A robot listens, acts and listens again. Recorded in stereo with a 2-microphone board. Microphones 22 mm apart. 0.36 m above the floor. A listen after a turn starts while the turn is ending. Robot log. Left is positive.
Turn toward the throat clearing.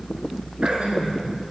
note: The throat clearing: about 65° right or 115° right.
cmd yaw -65
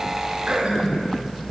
note: So it is at 50° right.
cmd yaw -50
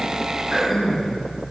end: Found it: throat clearing, straight ahead.